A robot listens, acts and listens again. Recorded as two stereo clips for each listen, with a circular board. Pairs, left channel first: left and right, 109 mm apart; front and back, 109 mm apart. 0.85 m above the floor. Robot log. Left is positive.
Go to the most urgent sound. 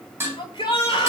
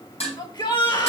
note: The shout: 45° left.
cmd yaw +45
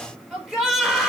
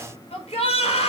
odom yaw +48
cmd fwd 1.0
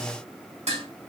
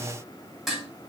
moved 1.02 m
cmd idle
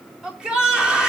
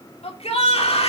note: The shout is now 10° right.
cmd yaw -10
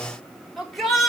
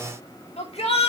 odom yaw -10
cmd fwd 1.0
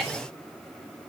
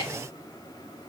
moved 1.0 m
cmd fwd 1.0
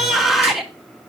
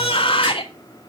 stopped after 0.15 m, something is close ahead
end: I am next to the shout.